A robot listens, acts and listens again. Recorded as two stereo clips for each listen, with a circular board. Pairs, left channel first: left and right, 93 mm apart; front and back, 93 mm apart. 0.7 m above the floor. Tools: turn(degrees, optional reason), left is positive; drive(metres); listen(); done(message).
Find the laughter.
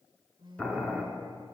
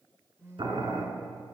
listen()
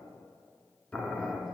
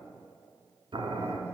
listen()
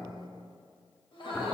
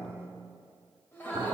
turn(degrees=70, reason="The laughter: 70° left.")
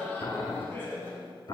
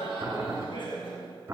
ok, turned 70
turn(degrees=25, reason="The laughter is now 25° left.")
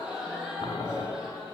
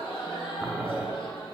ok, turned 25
turn(degrees=-10, reason="The laughter is now 10° right.")
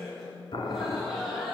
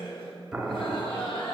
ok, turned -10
done("Found it: laughter, straight ahead, over 4 m away.")